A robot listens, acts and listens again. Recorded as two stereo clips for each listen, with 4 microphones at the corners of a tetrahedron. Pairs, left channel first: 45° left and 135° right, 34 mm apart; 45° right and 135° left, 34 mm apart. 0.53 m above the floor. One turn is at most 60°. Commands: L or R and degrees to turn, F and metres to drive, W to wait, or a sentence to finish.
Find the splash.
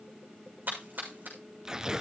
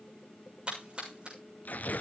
R60
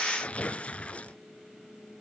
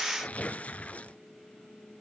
R60
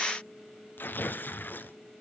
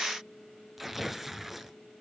R45
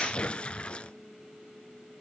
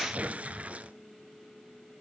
I heard a splash from this way, but can't make it out now.